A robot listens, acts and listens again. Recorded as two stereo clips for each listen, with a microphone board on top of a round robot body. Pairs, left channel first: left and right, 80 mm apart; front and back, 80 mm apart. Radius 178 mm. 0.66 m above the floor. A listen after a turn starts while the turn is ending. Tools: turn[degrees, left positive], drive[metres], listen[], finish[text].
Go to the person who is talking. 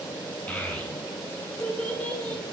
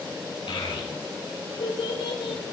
Thought: The child speaking: 15° left.
Action: turn[15]
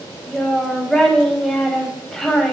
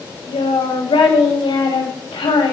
Action: drive[1.0]
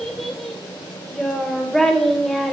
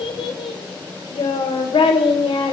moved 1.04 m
Action: drive[1.0]
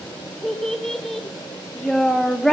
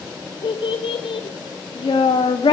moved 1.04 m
Action: drive[1.0]
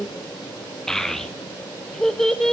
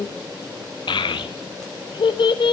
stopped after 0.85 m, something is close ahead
Action: finish[Arrived at the child speaking, straight ahead.]